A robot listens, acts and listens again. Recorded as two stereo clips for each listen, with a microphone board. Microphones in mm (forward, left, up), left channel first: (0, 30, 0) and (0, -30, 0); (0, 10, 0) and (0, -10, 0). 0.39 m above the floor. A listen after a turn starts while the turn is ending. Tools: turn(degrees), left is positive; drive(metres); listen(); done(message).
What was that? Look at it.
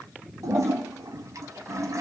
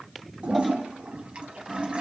turn(degrees=-70)
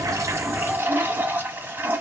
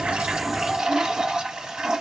turn(degrees=-35)
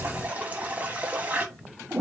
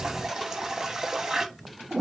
turn(degrees=-25)
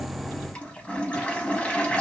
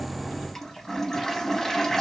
turn(degrees=20)
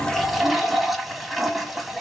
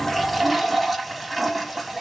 done("Found it: a toilet flushing, straight ahead, under 1 m away.")